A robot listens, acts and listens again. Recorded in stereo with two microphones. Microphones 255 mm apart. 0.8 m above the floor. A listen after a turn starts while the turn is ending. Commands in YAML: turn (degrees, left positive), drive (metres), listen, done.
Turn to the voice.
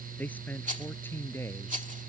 turn: 30
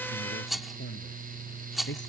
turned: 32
turn: 135
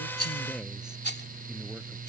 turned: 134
listen: true
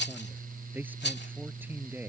done: "Found it: a man speaking, straight ahead."